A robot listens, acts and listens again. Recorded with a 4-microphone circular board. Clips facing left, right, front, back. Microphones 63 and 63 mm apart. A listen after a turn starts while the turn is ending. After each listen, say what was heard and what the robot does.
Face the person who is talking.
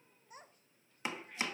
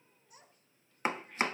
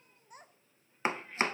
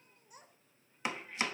The child speaking: 45° left. Turn 45° left.
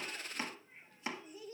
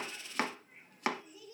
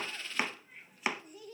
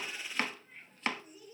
The child speaking is now 30° left. Turn 30° left.
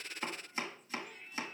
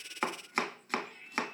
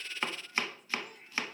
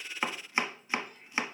Keep listening.
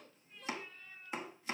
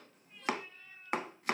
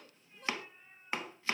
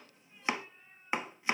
Keep listening.
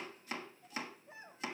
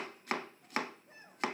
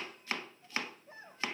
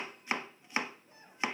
The child speaking is now 10° left. Turn 10° left.
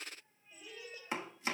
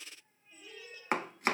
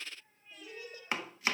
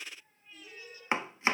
Found it: a child speaking, straight ahead.